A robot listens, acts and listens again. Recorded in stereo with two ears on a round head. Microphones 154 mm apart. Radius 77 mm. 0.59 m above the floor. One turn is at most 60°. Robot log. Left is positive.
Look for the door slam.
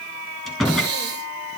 cmd yaw +30
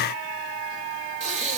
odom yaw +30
cmd idle
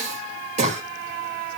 end: I heard a door slam, but can't make it out now. It was about 30° right or 150° left.